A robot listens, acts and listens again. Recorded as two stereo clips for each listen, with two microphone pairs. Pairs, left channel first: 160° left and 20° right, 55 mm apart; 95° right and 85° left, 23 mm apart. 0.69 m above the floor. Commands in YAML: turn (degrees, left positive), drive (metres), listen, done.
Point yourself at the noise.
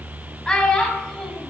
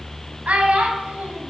turn: 75
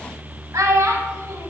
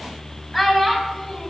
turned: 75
turn: -15
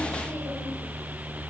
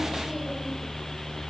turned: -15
listen: true
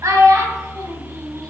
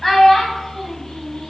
turn: -20
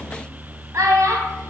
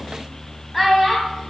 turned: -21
done: "Facing the child speaking, 2 to 4 m away."